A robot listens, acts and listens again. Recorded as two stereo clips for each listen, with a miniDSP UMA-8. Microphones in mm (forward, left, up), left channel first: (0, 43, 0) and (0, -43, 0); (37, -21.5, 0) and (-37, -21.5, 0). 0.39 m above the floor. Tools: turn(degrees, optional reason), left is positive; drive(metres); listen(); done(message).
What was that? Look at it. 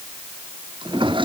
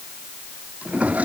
turn(degrees=-110, reason="The drawer: 110° right.")
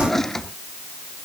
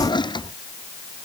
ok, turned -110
done("Found it: a drawer, straight ahead.")